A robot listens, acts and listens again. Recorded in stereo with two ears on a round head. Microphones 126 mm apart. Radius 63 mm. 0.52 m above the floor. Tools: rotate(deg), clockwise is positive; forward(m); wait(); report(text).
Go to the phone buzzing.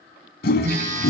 rotate(55)
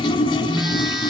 forward(1.0)
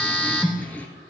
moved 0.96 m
rotate(-10)
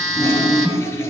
forward(1.0)
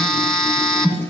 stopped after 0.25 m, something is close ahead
report("Arrived at the phone buzzing, straight ahead.")